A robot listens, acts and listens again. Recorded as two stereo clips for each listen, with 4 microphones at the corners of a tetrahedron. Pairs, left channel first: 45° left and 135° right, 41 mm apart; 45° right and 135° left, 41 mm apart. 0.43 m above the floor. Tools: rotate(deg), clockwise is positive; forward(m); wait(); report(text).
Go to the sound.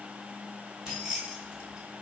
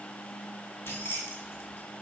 rotate(60)
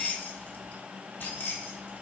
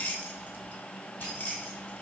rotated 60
forward(1.0)
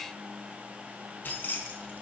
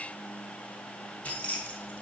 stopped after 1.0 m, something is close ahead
rotate(-10)
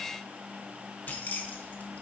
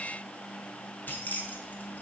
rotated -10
report("Arrived at the keys jangling, straight ahead.")